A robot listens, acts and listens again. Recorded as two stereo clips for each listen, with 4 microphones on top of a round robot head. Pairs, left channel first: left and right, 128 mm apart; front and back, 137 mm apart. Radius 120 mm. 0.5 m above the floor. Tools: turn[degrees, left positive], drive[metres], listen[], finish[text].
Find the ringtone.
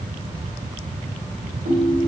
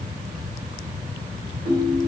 Thought: The ringtone: 110° right.
Action: turn[-110]
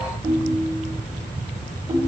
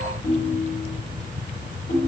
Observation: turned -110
Thought: The ringtone is now 25° right.
Action: turn[-25]
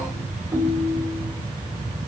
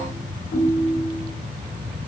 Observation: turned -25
Thought: The ringtone is now 15° right.
Action: turn[-15]
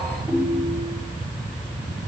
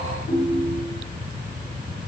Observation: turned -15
Thought: The ringtone is now 10° right.
Action: turn[-10]
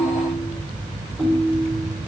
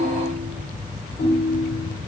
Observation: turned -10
Action: finish[Found it: a ringtone, straight ahead, 1 to 2 m away.]